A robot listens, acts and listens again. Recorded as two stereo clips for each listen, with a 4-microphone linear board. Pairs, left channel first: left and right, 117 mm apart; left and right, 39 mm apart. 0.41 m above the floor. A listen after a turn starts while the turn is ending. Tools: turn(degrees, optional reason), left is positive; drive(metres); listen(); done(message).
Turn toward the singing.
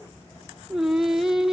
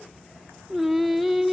turn(degrees=30)
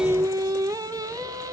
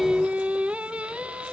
turn(degrees=-30, reason="So it is at 30° right.")
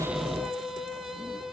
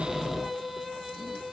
done("Found it: singing, straight ahead.")